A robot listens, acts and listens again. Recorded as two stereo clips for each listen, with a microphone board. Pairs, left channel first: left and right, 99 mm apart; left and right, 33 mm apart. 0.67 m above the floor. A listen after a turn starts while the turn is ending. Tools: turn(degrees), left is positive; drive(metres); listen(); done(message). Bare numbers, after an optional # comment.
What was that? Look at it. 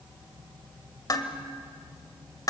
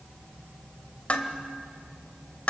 # The dishes clattering: about 40° left or 140° left.
turn(40)
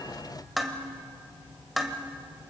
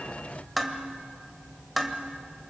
done("Facing the dishes clattering, 1 to 2 m away.")